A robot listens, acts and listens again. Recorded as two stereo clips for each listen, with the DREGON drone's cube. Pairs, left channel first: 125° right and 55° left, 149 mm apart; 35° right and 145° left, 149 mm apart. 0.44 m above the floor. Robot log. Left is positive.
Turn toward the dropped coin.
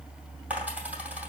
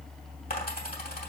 note: The dropped coin: 25° right.
cmd yaw -25
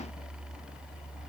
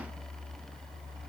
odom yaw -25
end: I heard a dropped coin from this way, but can't make it out now.